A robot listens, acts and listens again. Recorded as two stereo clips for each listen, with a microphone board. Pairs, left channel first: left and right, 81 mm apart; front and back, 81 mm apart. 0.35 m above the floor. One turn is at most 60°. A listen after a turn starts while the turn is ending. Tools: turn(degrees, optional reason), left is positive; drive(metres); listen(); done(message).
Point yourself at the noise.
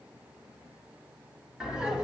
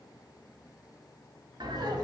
turn(degrees=-60, reason="The laughter: 170° right.")
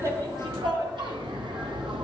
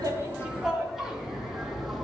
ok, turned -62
turn(degrees=-60, reason="The laughter is now 90° right.")
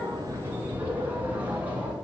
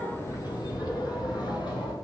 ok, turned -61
turn(degrees=-20, reason="The laughter is now 20° right.")
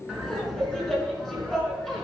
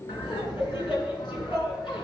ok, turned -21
done("Facing the laughter.")